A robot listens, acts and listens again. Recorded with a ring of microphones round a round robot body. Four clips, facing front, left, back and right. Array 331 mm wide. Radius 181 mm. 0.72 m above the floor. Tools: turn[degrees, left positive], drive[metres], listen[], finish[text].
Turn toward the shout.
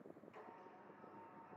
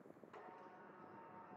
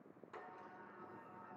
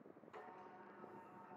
Action: listen[]
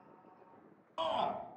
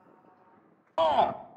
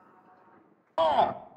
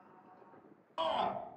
Thought: The shout: 140° left.
Action: turn[140]
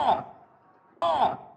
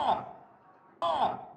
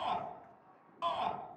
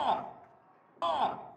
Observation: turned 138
Action: finish[Found it: a shout, straight ahead.]